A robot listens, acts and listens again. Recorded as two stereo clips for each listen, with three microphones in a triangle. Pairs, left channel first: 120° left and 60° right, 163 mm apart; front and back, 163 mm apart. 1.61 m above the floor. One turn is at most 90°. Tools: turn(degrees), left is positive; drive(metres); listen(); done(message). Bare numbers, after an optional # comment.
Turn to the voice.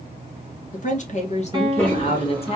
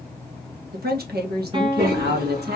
# The woman speaking: 175° left.
turn(90)
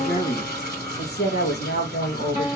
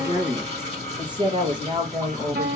# The woman speaking is now 120° left.
turn(90)
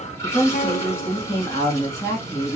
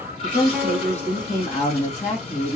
# The woman speaking is now 45° left.
turn(45)
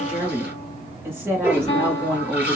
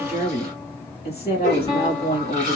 # The woman speaking is now 15° left.
turn(15)
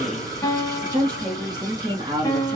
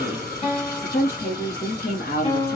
done("Facing the woman speaking.")